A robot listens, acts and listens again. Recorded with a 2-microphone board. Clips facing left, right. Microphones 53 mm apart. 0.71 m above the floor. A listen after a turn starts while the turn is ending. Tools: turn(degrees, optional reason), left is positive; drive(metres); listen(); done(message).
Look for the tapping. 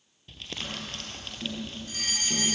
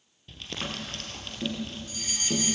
turn(degrees=-30, reason="The tapping: about 30° right or 150° right.")
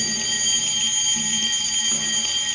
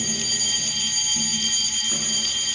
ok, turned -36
listen()
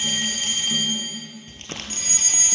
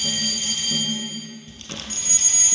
listen()
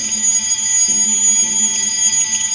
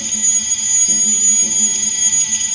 done("I heard tapping, but can't make it out now. It was about 5° left or 115° right.")